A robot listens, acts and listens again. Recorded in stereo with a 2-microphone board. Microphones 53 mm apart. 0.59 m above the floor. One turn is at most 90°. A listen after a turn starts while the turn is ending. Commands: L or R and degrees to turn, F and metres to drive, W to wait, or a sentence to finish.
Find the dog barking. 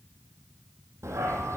R65
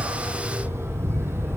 R50
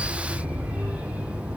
R20
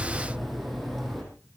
Found it: a dog barking, straight ahead, over 4 m away.